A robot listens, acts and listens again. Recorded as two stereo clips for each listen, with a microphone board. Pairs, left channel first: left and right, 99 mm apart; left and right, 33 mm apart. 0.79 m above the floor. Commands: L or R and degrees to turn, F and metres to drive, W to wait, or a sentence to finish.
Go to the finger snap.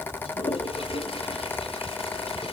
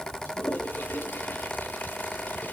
W
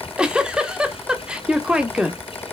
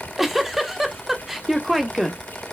W
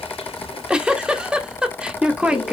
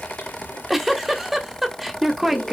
I can't make out a finger snap, only a toilet flushing and a giggle.